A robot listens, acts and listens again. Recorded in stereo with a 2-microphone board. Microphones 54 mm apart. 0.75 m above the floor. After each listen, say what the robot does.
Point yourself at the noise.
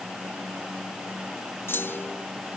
Turn 50° left.
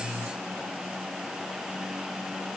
Keep listening.
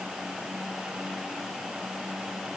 I heard a clunk, but can't make it out now. It was about straight ahead or 80° left.